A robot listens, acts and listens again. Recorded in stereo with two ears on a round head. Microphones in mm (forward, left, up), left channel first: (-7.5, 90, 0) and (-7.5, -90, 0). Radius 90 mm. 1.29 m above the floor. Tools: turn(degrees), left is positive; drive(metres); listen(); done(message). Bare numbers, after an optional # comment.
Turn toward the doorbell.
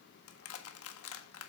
listen()
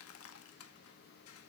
listen()
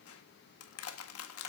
done("I can't make out a doorbell, only crushing.")